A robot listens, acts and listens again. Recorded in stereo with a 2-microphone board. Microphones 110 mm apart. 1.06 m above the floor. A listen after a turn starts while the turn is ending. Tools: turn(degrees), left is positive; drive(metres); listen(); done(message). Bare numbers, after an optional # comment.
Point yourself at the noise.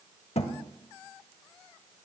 # The thud: about 70° left or 110° left.
turn(70)
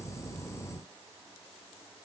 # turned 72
listen()
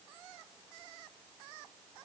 done("I heard a thud, but can't make it out now. It was about straight ahead or 35° left.")